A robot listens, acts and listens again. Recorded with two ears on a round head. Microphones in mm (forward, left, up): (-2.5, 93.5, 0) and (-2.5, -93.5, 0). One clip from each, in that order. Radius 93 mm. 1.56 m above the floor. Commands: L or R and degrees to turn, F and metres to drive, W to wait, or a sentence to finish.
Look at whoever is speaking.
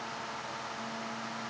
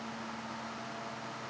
W
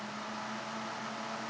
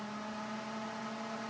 W
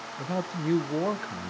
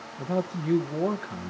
L25
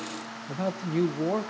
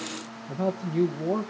L125
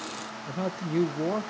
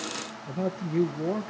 L45
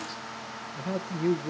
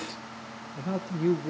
L15
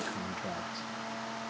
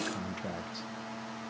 Found it: a man speaking, straight ahead, under 1 m away.